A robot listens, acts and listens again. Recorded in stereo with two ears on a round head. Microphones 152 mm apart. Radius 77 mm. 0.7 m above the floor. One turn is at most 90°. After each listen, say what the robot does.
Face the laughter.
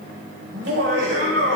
Turn 90° right.
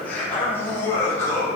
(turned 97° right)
Turn 15° left.
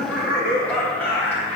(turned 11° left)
Turn 10° left.
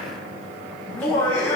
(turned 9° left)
Turn 10° left.
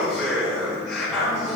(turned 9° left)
Facing the laughter, over 4 m away.